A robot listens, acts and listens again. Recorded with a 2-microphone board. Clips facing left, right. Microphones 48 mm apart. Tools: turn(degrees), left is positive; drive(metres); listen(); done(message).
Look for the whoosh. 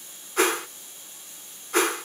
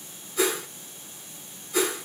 turn(degrees=55)
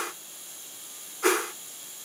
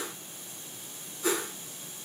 turn(degrees=70)
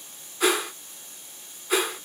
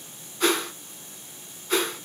done("Facing the whoosh, under 1 m away.")